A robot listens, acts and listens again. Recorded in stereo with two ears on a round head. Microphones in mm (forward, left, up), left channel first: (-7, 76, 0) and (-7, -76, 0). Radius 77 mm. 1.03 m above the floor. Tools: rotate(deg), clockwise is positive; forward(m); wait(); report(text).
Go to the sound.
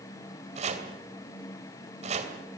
rotate(45)
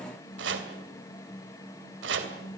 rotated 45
rotate(90)
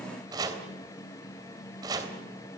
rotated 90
rotate(25)
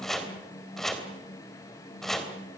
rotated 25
forward(1.0)
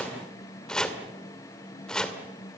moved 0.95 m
forward(1.0)
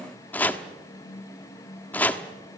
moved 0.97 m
rotate(-10)
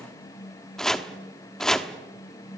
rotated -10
forward(1.0)
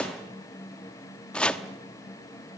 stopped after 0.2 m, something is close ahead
report("I am next to the chopping.")